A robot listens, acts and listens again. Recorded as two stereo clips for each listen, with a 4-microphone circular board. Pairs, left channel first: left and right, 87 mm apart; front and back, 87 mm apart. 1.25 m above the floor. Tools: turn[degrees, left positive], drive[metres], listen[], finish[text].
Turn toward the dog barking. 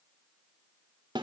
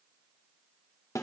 Action: listen[]
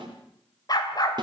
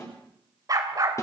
Thought: The dog barking: 130° left.
Action: turn[130]
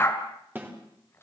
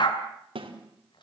Thought: The dog barking is now 30° left.
Action: turn[30]
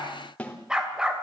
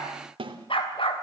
Thought: The dog barking is now 10° right.
Action: turn[-10]
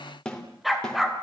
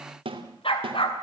Action: finish[Found it: a dog barking, straight ahead.]